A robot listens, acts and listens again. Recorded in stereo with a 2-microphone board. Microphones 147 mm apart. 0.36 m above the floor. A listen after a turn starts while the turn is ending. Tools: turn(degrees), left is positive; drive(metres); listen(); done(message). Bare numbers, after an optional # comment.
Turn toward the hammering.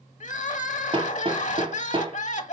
# The hammering: about 40° right or 140° right.
turn(-40)
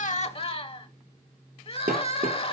# So it is at 100° right.
turn(-100)
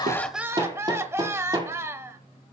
# The hammering is now 30° right.
turn(-30)
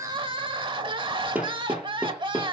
# The hammering is now 10° right.
turn(-10)
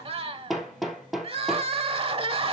done("Facing the hammering, 2 to 4 m away.")